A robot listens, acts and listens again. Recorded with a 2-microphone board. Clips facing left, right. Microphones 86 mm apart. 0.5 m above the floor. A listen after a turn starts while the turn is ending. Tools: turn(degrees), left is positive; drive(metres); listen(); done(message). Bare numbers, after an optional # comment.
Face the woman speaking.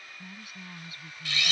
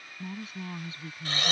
# The woman speaking: about 30° right or 150° right.
turn(-30)
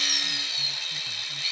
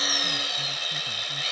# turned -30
listen()
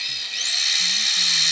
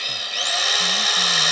listen()
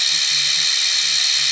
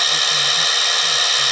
done("I heard a woman speaking, but can't make it out now. It was about straight ahead or 120° right.")